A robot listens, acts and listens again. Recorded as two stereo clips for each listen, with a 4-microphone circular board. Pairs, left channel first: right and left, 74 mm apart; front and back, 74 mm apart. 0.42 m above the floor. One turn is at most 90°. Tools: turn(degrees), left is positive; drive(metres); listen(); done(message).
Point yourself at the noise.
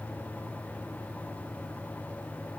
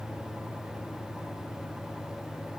listen()
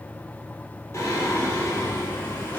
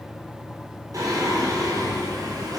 turn(degrees=-90)
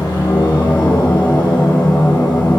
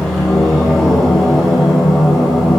turn(degrees=-90)
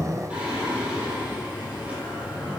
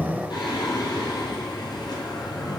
turn(degrees=15)
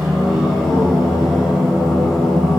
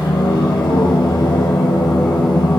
done("Facing the singing, 2 to 4 m away.")